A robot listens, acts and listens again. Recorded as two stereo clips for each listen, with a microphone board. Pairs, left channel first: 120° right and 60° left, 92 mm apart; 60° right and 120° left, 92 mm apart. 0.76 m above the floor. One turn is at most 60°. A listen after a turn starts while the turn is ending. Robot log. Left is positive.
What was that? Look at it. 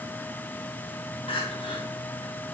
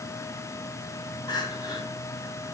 note: The crying: 105° right.
cmd yaw -60
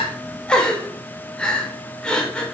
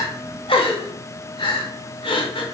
note: The crying is now 40° right.
cmd yaw -40
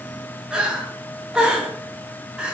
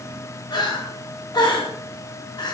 note: The crying is now 20° right.
cmd yaw -20
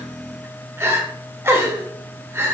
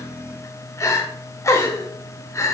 end: Found it: crying, straight ahead.